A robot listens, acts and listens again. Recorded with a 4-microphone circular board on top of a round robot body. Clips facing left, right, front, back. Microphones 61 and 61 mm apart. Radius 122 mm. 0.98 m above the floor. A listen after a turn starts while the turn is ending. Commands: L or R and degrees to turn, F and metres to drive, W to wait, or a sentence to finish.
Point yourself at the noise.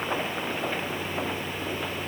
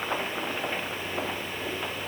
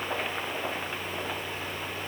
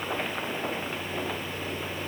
W
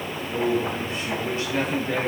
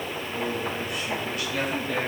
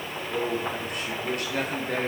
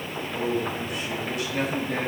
L30
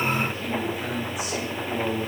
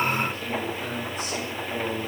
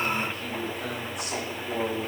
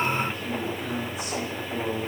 L10
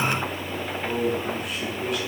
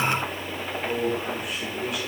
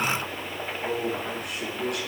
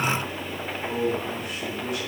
Facing the man speaking.